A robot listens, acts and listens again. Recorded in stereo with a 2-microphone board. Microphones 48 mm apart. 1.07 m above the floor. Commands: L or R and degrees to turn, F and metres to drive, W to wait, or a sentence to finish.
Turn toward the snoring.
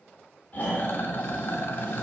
L40
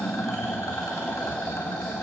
Facing the snoring, 2 to 4 m away.